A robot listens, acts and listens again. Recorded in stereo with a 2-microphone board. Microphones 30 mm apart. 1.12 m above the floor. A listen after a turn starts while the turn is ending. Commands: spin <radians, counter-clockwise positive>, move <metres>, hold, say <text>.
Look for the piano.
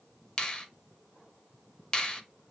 hold
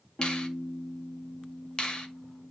spin 1.57
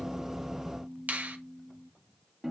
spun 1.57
spin -0.17
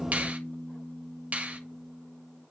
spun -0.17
say Found it: a piano, straight ahead, 1 to 2 m away.